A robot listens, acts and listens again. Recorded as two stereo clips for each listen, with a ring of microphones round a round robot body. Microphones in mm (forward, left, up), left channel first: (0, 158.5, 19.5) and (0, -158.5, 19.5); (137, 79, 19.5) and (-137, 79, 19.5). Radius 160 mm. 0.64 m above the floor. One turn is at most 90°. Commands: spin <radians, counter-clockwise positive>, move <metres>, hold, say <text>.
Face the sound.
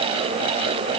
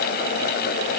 hold
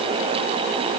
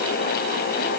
hold
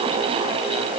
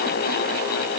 say I can't make out anything.